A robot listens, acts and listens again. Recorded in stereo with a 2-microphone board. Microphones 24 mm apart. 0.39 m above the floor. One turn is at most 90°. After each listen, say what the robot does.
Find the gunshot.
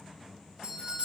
Keep listening.
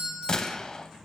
Turn 30° left.
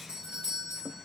Keep listening.
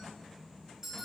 I heard a gunshot, but can't make it out now. It was about straight ahead or 120° left.